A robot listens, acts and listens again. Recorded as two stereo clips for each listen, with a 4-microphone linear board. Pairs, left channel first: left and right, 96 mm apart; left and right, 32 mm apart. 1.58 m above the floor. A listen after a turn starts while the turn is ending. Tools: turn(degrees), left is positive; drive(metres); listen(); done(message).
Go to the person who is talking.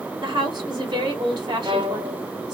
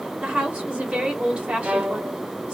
turn(degrees=-45)
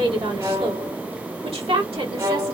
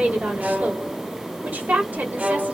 turn(degrees=-85)
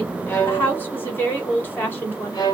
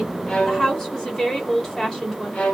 turn(degrees=20)
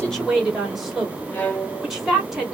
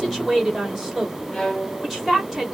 drive(metres=1.0)
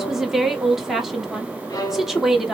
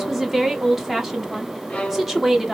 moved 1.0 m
drive(metres=1.0)
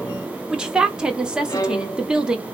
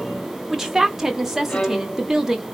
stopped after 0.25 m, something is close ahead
turn(degrees=-10)
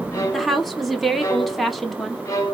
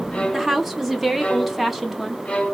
done("Arrived at the woman speaking, straight ahead.")